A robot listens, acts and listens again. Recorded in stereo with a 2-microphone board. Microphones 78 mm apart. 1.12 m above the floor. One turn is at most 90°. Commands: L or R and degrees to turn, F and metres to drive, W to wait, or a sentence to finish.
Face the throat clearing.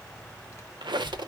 W
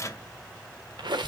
W
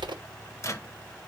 I can't make out throat clearing to turn to.